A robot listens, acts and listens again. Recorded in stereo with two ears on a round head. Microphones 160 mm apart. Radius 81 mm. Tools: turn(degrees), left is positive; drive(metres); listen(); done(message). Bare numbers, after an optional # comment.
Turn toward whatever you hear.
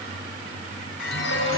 turn(90)
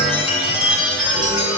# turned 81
done("Facing the chime, over 4 m away.")